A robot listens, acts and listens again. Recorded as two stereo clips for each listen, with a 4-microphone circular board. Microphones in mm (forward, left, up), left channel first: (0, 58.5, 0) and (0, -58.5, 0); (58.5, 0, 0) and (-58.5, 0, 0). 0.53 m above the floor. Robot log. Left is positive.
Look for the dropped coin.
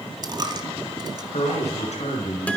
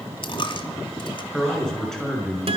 note: The dropped coin: 40° right.
cmd yaw -40
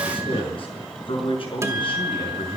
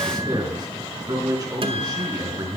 end: I heard a dropped coin from this way, but can't make it out now.